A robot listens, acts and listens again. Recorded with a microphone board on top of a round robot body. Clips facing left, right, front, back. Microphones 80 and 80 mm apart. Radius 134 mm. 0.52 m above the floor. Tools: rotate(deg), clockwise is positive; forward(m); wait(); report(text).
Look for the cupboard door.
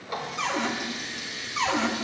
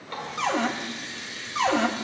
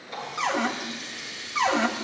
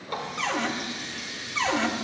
rotate(70)
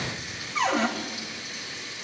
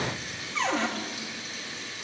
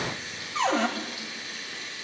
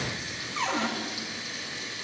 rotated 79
report("Found it: a cupboard door, straight ahead, 2 to 4 m away.")